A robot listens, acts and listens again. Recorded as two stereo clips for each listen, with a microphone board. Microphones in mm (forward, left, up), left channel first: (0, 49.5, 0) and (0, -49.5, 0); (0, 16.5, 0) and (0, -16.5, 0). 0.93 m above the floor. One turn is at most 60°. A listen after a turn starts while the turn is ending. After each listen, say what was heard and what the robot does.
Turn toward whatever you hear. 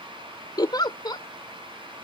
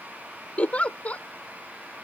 The giggle: about 45° left or 135° left. Turn 45° left.
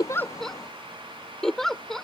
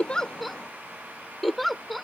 Found it: a giggle, straight ahead.